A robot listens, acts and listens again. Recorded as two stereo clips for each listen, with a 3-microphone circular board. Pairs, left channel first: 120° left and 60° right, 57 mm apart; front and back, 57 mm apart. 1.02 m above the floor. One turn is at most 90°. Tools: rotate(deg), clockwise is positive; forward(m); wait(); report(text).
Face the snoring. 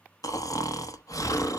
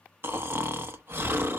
rotate(-90)
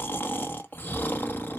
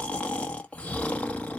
rotate(-65)
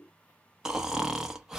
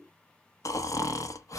rotate(-20)
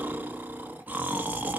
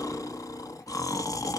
report("Facing the snoring.")